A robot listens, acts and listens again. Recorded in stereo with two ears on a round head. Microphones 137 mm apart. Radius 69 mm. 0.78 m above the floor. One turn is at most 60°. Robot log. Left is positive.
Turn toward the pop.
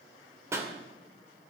note: The pop: about 15° right or 165° right.
cmd yaw -15
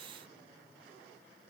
cmd idle
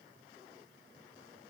end: I heard a pop, but can't make it out now. It was about straight ahead or 150° right.